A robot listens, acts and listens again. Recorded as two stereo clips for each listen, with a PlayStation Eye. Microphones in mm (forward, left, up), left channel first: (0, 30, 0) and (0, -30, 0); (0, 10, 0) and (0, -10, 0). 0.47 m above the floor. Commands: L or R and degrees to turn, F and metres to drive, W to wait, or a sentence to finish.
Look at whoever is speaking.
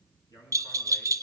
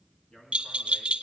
L90
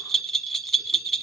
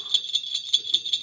W
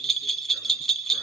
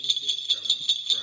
W
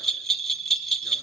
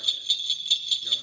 Facing where the man speaking came from. I can't hear it now.